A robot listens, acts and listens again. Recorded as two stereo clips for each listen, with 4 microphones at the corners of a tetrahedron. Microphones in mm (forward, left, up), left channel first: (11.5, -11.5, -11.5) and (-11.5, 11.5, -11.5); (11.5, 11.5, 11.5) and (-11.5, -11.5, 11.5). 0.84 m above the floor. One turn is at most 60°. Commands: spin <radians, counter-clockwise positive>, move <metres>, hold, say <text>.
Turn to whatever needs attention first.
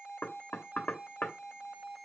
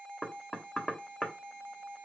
hold
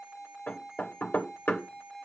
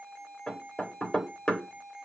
hold
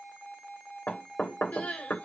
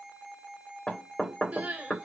spin -1.05
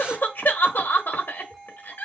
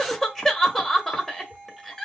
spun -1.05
spin -0.61
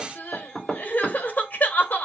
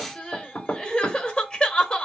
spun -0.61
spin -0.35
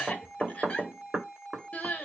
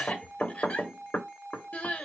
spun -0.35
say Found it: crying, straight ahead, 1 to 2 m away.